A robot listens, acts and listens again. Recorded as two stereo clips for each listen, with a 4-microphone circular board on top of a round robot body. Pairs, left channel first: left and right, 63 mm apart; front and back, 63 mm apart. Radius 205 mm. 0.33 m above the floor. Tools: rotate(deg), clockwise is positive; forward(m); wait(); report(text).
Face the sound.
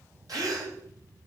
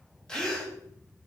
rotate(80)
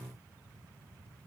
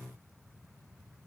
report("Facing where the gasp came from. I can't hear it now.")